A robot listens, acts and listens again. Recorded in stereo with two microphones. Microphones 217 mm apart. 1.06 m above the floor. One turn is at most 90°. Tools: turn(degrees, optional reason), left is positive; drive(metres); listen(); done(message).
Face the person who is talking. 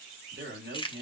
turn(degrees=-55, reason="The man speaking: about 55° right or 125° right.")
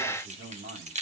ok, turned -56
turn(degrees=-65, reason="So it is at 65° right.")
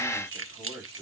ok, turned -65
done("Facing the man speaking.")